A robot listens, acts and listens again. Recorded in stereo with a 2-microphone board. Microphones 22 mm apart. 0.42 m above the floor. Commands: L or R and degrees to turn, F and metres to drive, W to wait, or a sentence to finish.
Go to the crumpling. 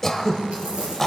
R90
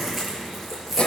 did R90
R10
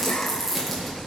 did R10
F1.0
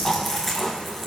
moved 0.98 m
L10
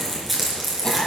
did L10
F1.0
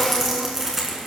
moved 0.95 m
R10
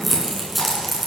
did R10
F1.0
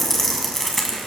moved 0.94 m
L10
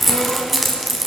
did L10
F1.0
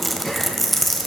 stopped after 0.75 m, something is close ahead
Arrived at the crumpling, straight ahead.